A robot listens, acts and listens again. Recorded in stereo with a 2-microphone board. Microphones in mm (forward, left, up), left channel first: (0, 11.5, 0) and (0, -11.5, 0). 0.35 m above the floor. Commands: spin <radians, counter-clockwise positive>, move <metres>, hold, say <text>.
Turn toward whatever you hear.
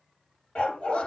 spin 0.87
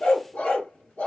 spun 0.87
spin 1.31
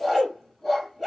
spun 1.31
say Facing the dog barking, 1 to 2 m away.